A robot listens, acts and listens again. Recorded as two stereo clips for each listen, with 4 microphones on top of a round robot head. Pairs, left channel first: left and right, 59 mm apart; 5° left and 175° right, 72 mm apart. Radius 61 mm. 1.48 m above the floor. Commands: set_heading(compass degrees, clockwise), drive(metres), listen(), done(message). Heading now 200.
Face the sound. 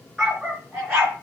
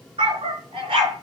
set_heading(10)
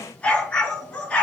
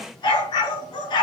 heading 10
set_heading(350)
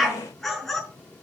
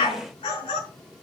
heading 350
done("Found it: a dog barking, straight ahead.")